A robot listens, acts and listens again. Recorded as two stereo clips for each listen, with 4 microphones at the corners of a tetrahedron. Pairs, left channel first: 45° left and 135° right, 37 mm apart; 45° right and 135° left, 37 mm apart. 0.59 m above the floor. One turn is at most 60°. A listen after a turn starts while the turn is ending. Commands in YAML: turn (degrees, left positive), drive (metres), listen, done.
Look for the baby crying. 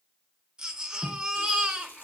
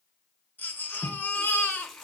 turn: -60
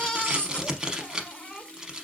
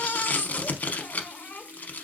done: "Found it: a baby crying, straight ahead."